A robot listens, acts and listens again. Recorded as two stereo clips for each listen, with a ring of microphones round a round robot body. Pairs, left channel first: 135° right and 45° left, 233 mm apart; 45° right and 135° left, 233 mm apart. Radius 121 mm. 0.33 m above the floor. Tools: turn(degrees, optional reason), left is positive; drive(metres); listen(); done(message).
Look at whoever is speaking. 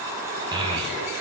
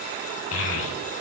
turn(degrees=-25, reason="The child speaking: 25° right.")
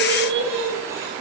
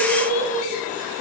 turn(degrees=10, reason="The child speaking is now 10° left.")
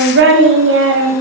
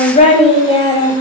turn(degrees=25, reason="The child speaking is now 25° left.")
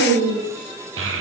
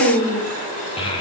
turn(degrees=25, reason="The child speaking is now 25° left.")
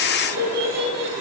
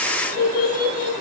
done("Facing the child speaking.")